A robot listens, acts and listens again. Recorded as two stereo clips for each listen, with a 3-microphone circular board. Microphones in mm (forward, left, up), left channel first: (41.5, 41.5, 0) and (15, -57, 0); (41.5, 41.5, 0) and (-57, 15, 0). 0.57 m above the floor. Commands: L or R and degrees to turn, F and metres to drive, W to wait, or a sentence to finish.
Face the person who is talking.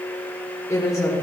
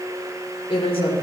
L20
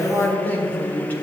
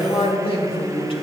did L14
Found it: a woman speaking, straight ahead.